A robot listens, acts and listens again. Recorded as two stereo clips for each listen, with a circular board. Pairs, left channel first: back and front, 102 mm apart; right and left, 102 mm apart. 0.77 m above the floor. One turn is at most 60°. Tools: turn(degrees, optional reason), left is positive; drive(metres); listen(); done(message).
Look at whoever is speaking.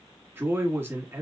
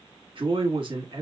turn(degrees=60, reason="The man speaking: 65° left.")
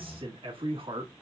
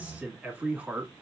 turn(degrees=15, reason="The man speaking is now 15° left.")
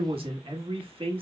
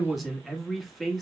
done("Facing the man speaking.")